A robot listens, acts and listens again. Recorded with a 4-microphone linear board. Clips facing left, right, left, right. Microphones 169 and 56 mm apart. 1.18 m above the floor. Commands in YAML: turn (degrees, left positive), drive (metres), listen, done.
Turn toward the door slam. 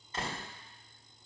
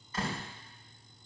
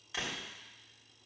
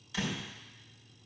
turn: 25
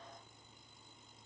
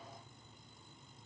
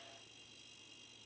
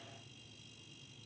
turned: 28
listen: true
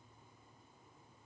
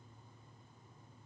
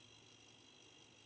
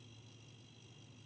done: "I heard a door slam, but can't make it out now. It was about straight ahead or 125° left."